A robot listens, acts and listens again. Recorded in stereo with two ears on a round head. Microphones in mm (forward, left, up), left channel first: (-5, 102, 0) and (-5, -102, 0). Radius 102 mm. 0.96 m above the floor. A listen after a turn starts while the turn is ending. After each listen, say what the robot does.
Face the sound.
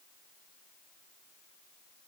Keep listening.
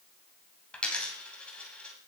Turn 30° left.
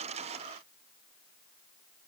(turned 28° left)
Keep listening.
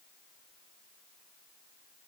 I heard a dropped coin, but can't make it out now. It was about 25° right or 145° left.